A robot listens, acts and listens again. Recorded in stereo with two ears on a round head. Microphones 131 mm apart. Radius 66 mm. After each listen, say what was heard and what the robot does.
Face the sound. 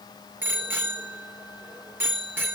Turn 30° right.
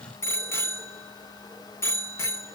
So it is at 15° left. Turn 15° left.
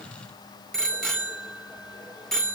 Facing the bicycle bell.